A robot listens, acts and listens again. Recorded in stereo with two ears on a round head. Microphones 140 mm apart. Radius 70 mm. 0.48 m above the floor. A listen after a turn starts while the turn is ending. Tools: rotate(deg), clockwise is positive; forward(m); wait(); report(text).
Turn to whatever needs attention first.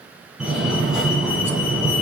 rotate(30)
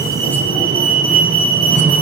rotate(145)
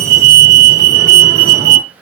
rotate(50)
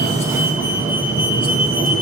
rotate(15)
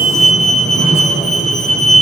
report("Found it: a fire alarm, straight ahead.")